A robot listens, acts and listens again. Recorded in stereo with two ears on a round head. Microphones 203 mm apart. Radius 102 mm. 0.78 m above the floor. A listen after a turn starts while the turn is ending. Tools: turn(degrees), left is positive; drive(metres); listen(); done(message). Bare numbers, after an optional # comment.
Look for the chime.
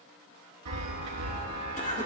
turn(-90)
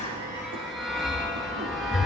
done("Facing the chime, 2 to 4 m away.")